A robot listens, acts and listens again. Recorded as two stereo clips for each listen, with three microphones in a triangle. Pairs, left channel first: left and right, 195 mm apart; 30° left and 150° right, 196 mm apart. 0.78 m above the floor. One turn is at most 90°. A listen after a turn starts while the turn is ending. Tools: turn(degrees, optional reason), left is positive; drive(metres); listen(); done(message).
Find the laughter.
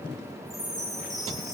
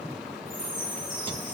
listen()
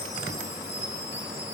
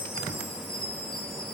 listen()
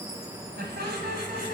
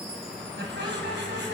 turn(degrees=-90, reason="The laughter: 125° right.")
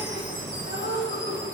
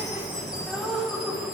turn(degrees=-60, reason="The laughter is now 60° right.")
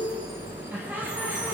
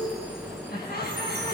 turn(degrees=-10, reason="The laughter is now 10° right.")
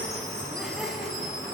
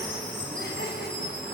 listen()
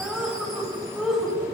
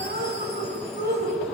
done("Found it: laughter, straight ahead, over 4 m away.")